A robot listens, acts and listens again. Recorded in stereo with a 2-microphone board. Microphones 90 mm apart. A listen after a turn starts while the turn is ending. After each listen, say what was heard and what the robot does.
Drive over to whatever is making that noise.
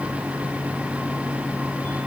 Keep listening.
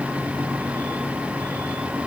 Keep listening.
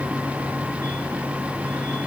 I can't make out anything to turn to.